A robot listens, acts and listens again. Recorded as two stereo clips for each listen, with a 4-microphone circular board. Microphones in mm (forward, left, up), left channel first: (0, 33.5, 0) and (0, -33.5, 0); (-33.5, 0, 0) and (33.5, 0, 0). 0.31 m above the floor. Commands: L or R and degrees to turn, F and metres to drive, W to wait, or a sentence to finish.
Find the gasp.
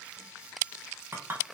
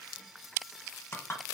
W
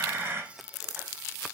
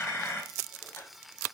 W
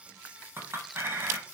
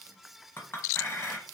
I can't make out a gasp, only a clink.